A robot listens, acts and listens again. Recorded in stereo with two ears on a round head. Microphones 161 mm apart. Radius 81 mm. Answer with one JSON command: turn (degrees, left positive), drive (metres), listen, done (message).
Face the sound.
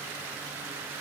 {"listen": true}
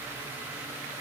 {"listen": true}
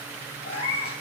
{"turn": 35}
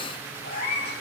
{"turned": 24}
{"turn": 120}
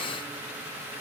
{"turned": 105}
{"turn": 15}
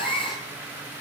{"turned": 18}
{"done": "Facing the cat meowing, over 4 m away."}